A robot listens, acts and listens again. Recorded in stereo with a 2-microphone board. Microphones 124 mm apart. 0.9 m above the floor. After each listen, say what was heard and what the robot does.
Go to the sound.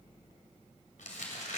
Turn 90° left.
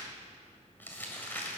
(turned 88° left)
So it is at 15° left. Turn 15° left.
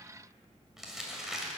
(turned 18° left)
Drive 1.0 m forward.
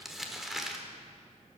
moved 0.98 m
Drive 1.0 m forward.
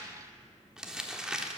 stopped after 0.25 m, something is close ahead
I am next to the crumpling.